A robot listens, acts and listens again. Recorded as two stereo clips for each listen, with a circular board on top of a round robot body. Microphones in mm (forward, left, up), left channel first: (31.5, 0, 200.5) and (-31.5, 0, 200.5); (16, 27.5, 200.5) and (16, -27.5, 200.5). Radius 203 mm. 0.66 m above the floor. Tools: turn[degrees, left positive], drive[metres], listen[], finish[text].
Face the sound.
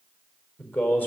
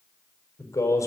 Thought: The man speaking: 65° left.
Action: turn[65]
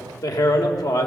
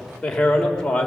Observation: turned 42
Thought: The man speaking is now 10° left.
Action: turn[10]
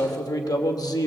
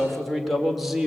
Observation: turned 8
Action: finish[Found it: a man speaking, straight ahead.]